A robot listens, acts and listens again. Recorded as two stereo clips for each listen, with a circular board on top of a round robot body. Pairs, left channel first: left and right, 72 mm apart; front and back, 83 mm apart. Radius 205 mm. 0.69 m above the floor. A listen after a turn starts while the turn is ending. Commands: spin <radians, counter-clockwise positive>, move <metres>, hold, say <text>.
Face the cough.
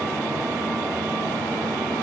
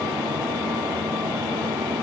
hold
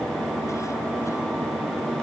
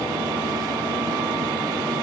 hold
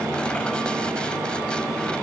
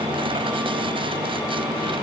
say I can't make out a cough.